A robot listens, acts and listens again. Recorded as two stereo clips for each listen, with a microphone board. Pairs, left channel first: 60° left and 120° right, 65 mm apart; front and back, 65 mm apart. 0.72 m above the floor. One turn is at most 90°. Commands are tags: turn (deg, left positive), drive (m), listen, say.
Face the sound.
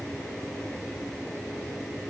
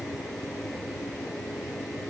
<listen/>
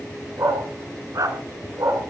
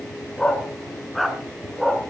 <turn deg="-90"/>
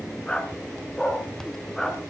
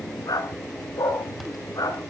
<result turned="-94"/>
<turn deg="-25"/>
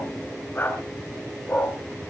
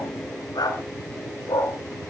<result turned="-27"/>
<say>Found it: a dog barking, straight ahead, 2 to 4 m away.</say>